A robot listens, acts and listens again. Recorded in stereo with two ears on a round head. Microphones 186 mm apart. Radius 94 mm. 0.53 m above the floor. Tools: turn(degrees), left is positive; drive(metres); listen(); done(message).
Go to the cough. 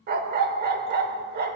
listen()
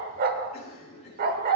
turn(degrees=30)
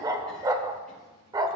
listen()
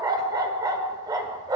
listen()
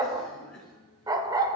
drive(metres=1.0)
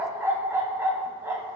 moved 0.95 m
listen()
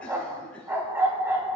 listen()
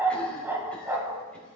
done("Facing where the cough came from. I can't hear it now. I did not reach it.")